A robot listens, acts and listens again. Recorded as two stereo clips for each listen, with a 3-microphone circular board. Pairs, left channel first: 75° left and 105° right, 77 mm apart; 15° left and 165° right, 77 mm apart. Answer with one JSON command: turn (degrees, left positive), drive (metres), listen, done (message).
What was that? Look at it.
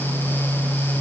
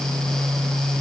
{"listen": true}
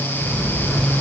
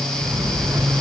{"turn": 155}
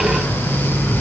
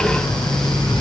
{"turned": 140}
{"turn": 15}
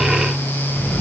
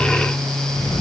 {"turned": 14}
{"done": "Facing the sliding door."}